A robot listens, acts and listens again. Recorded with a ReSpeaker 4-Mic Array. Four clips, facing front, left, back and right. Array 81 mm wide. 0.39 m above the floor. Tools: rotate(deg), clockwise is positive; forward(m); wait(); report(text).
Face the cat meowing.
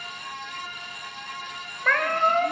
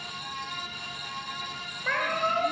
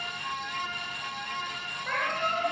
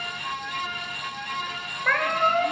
rotate(25)
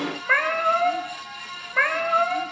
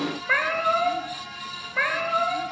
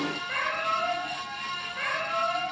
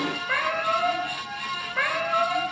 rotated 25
report("Found it: a cat meowing, straight ahead, 2 to 4 m away.")